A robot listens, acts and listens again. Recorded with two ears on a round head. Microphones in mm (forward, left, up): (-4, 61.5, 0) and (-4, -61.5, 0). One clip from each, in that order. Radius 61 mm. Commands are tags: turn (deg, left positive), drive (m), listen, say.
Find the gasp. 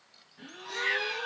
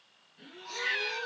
<turn deg="30"/>
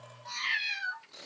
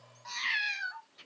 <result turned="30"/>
<listen/>
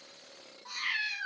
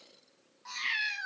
<say>I heard a gasp, but can't make it out now. It was about 30° right or 150° left.</say>